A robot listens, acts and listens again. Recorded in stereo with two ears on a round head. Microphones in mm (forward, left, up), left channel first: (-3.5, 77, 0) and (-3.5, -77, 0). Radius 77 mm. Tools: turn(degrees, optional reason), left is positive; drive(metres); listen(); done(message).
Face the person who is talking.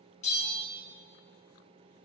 listen()
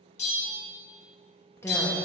turn(degrees=30)
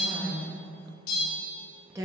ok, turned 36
turn(degrees=-20, reason="So it is at 20° right.")
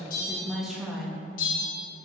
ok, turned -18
done("Found it: a woman speaking, straight ahead, 1 to 2 m away.")